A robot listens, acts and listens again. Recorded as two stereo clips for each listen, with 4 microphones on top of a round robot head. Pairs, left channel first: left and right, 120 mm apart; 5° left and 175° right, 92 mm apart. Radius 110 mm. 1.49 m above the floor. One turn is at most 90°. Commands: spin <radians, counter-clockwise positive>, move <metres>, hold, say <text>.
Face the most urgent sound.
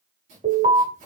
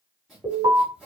spin -1.57
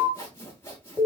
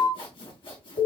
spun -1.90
spin -0.26
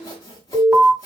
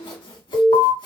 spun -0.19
say Facing the alarm, 2 to 4 m away.